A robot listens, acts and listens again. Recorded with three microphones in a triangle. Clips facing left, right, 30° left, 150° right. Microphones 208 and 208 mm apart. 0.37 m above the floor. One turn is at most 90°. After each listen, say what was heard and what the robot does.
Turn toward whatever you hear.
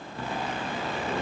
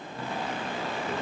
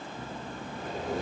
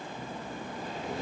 Keep listening.
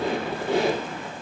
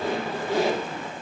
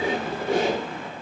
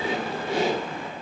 The squeak: 65° left. Turn 65° left.
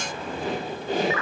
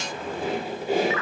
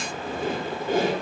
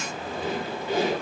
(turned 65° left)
The squeak is now 10° right. Turn 10° right.
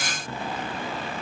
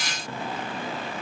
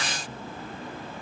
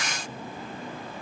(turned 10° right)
Keep listening.
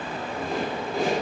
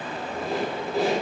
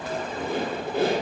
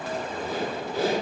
Found it: a squeak, straight ahead.